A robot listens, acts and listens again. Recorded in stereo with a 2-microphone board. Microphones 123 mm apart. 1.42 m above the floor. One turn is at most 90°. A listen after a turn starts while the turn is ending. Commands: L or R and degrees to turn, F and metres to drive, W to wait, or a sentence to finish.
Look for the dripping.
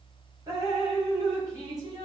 R30
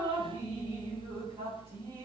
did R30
R90
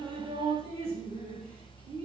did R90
R50
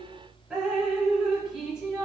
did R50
Found it: dripping, straight ahead, 2 to 4 m away.